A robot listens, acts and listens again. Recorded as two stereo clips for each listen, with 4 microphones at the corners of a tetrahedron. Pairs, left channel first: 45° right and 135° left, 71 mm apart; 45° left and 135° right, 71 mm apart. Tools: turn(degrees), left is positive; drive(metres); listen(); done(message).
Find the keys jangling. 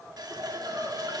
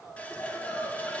listen()
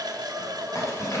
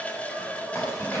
done("Facing the keys jangling.")